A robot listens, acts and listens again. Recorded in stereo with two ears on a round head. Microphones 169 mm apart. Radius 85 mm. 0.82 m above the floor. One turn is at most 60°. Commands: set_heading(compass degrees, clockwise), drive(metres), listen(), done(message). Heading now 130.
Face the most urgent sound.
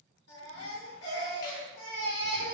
set_heading(70)
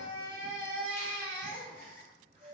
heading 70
set_heading(55)
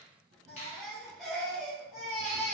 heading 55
done("Found it: a baby crying, straight ahead.")